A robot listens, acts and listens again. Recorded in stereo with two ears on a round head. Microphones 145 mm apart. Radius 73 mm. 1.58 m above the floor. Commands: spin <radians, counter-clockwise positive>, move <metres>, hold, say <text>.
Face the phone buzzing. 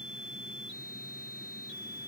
hold
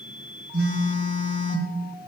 spin -1.05
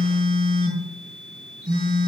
spin -0.96
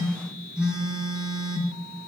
say Facing the phone buzzing.